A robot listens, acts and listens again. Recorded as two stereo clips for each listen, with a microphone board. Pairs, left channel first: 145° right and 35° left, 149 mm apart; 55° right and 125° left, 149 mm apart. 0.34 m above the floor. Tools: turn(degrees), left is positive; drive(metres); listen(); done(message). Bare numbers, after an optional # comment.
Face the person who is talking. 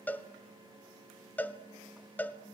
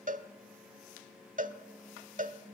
listen()
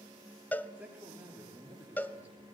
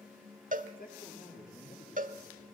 # The man speaking: 45° right.
turn(-45)
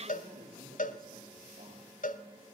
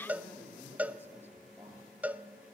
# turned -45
# The man speaking is now 20° left.
turn(20)
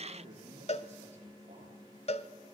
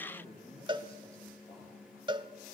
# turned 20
done("Facing the man speaking, over 4 m away.")